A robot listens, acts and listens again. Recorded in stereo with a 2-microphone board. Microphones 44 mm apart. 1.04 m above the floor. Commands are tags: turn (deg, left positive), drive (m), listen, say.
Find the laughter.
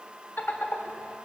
<turn deg="55"/>
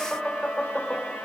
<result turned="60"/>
<turn deg="20"/>
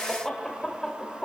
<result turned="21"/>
<turn deg="15"/>
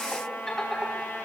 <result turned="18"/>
<say>Facing the laughter, 2 to 4 m away.</say>